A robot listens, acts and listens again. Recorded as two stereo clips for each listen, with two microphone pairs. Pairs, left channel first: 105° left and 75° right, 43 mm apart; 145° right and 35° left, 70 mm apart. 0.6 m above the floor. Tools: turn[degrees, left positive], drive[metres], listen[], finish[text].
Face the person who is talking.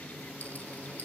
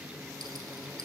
Action: listen[]
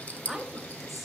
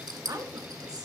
Thought: The woman speaking: 20° left.
Action: turn[20]
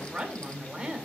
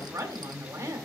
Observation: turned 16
Action: finish[Found it: a woman speaking, straight ahead, 1 to 2 m away.]